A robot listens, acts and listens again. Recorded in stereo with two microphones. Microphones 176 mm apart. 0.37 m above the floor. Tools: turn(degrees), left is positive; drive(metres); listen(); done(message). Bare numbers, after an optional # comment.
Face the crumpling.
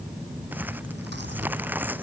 turn(-30)
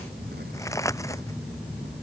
# So it is at 20° left.
turn(20)
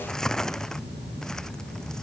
done("Found it: crumpling, straight ahead.")